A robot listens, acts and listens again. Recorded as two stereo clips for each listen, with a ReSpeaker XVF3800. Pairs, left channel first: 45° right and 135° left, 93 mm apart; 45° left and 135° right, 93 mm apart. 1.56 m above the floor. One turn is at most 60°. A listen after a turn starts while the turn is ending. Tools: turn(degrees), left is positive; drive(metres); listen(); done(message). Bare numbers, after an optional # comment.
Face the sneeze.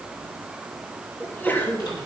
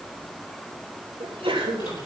# The sneeze: 115° right.
turn(-60)
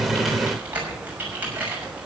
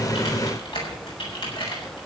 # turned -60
# Nothing new. It was at 55° right.
turn(-55)
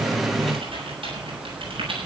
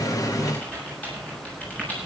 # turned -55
done("I heard a sneeze from this way, but can't make it out now.")